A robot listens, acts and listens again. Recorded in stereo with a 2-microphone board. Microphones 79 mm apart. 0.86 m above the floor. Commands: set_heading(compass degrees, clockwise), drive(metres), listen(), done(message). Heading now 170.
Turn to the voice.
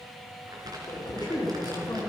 set_heading(105)
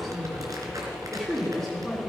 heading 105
done("Found it: a woman speaking, straight ahead.")